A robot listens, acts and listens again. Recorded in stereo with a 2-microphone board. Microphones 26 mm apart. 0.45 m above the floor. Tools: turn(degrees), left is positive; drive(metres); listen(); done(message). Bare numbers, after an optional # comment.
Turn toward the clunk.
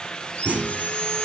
turn(-90)
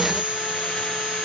done("I heard a clunk from this way, but can't make it out now.")